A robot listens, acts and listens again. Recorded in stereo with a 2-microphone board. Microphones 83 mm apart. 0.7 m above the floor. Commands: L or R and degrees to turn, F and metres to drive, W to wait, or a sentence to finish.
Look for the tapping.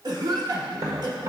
R45
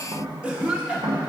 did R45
R90
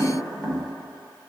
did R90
L10
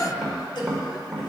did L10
Facing the tapping.